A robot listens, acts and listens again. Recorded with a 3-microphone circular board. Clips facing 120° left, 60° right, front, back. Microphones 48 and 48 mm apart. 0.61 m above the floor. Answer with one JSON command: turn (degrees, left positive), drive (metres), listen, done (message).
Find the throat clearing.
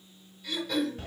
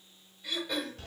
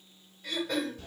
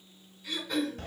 {"turn": 10}
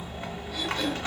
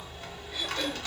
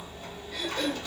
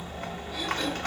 {"listen": true}
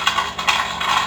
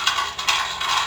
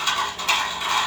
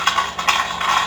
{"listen": true}
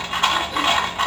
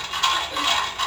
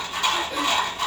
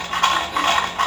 {"done": "I heard throat clearing from this way, but can't make it out now."}